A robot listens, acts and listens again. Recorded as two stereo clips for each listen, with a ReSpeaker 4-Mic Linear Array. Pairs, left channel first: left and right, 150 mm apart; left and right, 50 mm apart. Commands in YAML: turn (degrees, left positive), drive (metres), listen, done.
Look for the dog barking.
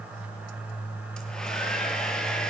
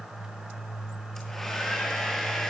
listen: true
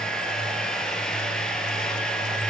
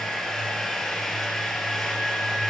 listen: true
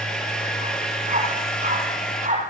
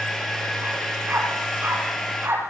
turn: -55
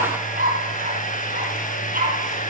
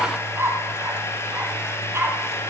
turn: -65
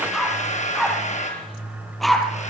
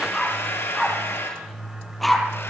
done: "Facing the dog barking, over 4 m away."